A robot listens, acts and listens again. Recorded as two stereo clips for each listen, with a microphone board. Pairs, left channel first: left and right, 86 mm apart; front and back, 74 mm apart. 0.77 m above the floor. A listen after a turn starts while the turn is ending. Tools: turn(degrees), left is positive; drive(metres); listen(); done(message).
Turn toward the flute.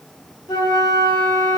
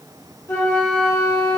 turn(degrees=55)
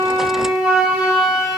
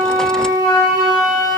turn(degrees=-10)
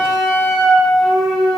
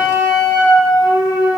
done("Facing the flute, under 1 m away.")